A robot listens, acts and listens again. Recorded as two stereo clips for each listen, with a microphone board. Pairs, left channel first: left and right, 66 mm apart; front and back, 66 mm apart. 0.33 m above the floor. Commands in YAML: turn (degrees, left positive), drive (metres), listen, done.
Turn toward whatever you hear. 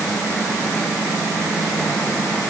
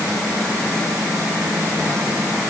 listen: true
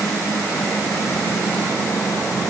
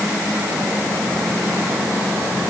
listen: true
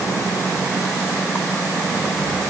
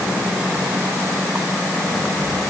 done: "I can't make out anything to turn to."